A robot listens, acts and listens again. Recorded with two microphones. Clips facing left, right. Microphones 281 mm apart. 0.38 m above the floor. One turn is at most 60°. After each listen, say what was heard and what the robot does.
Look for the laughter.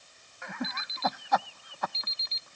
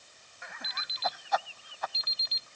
The laughter: about 60° left or 120° left. Turn 60° left.
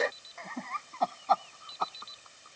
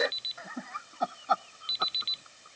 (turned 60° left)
So it is at 15° right. Turn 15° right.
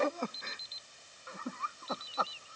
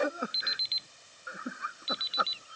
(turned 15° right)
The laughter is now 15° right. Turn 15° right.
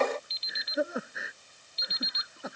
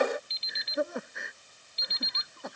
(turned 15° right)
Found it: laughter, straight ahead.